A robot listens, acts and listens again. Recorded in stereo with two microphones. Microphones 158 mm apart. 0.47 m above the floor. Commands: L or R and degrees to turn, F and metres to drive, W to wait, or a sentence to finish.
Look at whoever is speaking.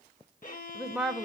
L30
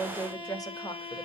L155
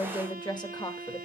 L30
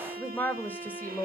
L15
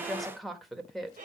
Facing the woman speaking.